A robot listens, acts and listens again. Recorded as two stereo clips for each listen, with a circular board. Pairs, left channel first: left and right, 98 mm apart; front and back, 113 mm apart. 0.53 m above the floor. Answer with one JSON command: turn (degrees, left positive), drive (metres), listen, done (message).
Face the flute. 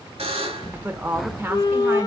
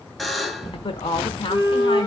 {"turn": 50}
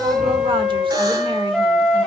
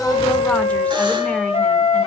{"done": "Found it: a flute, straight ahead."}